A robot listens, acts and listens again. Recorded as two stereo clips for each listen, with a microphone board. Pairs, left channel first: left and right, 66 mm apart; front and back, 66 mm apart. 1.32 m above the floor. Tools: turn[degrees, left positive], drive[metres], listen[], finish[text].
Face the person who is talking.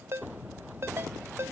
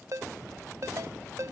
Action: listen[]
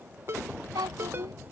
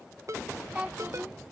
Thought: The child speaking: 105° right.
Action: turn[-105]
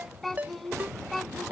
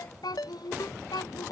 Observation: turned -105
Action: finish[Facing the child speaking.]